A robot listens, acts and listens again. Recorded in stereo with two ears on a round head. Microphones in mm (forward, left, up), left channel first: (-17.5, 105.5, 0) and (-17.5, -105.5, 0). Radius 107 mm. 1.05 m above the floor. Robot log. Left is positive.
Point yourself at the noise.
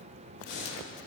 note: The breathing: about 45° left or 135° left.
cmd yaw +45
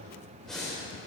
end: Facing the breathing.